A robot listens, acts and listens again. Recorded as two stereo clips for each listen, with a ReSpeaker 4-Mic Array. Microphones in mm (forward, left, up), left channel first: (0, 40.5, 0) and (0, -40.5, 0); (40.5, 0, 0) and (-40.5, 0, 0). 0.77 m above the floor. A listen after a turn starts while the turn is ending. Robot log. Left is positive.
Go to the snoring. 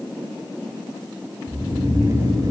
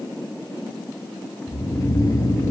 note: The snoring: 50° right.
cmd yaw -50
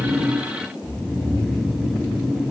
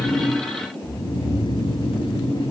cmd fwd 1.0
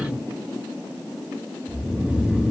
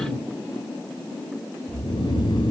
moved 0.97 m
note: The snoring is now 15° right.
cmd yaw -15
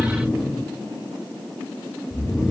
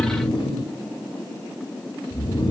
cmd fwd 1.0
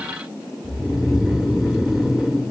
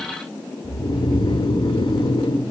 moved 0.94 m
cmd fwd 1.0
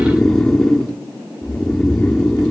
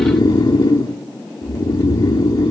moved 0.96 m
cmd fwd 1.0
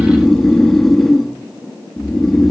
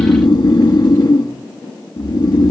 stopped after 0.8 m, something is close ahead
end: I am next to the snoring.